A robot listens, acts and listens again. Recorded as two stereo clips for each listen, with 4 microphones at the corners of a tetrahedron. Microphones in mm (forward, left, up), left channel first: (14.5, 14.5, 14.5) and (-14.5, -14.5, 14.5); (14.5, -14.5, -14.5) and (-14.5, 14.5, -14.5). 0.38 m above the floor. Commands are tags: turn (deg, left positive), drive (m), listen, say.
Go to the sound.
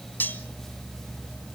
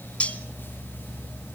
<turn deg="10"/>
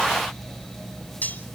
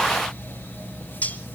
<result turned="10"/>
<drive m="1.0"/>
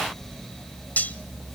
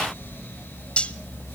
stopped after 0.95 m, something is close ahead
<turn deg="10"/>
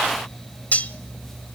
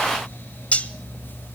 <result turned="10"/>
<say>I am next to the cutlery clinking.</say>